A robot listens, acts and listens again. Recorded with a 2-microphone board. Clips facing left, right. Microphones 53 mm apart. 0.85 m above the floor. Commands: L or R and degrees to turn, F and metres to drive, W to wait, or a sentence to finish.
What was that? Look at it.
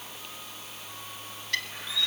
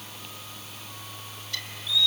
L55
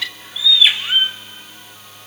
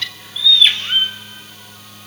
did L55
L10
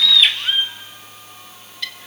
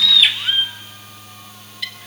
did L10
Facing the bird, 1 to 2 m away.